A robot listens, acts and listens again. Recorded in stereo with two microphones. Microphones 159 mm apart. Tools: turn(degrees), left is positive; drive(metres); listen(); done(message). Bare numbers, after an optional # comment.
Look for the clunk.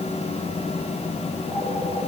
listen()
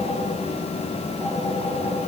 listen()
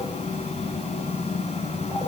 done("I can't make out a clunk to turn to.")